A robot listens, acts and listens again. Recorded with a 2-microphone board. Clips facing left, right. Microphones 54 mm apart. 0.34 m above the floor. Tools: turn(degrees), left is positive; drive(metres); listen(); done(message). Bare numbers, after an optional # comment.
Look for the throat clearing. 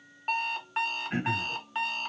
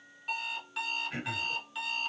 # The throat clearing: about 30° left or 150° left.
turn(30)
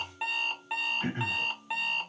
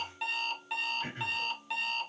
# So it is at 115° left.
turn(115)
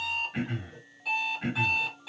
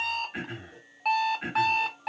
# The throat clearing is now 10° right.
turn(-10)
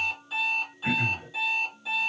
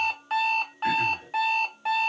done("Found it: throat clearing, straight ahead, 1 to 2 m away.")